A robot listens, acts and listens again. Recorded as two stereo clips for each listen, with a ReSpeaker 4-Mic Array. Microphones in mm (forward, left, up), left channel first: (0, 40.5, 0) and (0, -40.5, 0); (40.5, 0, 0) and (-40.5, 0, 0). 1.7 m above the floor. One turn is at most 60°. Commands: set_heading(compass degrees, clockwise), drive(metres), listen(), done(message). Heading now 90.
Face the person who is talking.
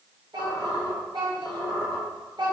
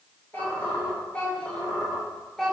set_heading(150)
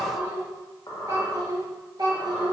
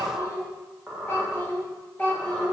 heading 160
set_heading(220)
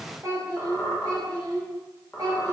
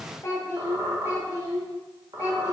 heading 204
set_heading(254)
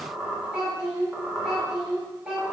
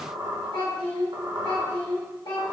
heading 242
set_heading(252)
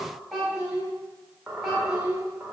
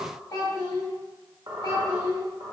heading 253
done("Facing the child speaking, 1 to 2 m away.")